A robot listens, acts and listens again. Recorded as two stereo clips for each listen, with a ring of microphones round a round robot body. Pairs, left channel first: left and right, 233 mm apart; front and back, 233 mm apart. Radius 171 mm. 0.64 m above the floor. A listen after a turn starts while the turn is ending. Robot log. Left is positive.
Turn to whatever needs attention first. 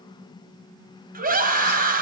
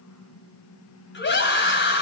note: The scream: 40° right.
cmd yaw -40
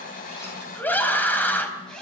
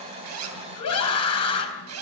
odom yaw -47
note: The scream is now 10° left.
cmd yaw +10
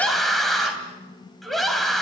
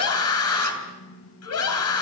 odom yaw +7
end: Facing the scream.